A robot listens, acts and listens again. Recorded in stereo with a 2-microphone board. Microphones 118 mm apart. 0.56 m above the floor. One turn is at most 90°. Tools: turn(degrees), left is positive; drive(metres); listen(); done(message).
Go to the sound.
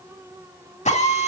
turn(degrees=90)
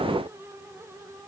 listen()
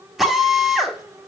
drive(metres=1.0)
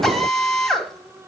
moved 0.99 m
drive(metres=1.0)
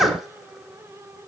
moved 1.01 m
drive(metres=1.0)
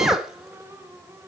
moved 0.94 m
drive(metres=1.0)
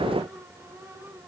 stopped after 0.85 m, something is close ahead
listen()
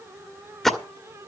done("Arrived at the drill, straight ahead.")